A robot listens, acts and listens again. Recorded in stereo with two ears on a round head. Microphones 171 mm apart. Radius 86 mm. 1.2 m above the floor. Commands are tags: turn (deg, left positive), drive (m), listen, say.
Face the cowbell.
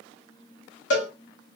<turn deg="65"/>
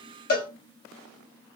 <turn deg="50"/>
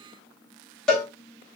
<say>Facing the cowbell.</say>